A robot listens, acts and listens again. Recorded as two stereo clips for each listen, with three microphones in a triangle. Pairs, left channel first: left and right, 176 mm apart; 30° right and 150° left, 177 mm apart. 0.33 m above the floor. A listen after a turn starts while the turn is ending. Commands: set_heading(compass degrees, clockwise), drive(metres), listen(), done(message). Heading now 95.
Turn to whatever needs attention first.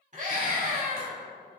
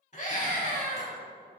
set_heading(160)
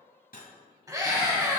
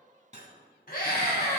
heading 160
set_heading(185)
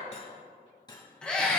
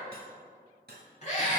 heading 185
done("Facing the scream.")